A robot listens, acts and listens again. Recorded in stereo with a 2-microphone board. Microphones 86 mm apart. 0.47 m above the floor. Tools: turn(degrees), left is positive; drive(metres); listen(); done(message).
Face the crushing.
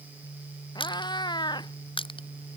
turn(degrees=90)
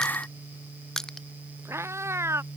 done("Found it: crushing, straight ahead.")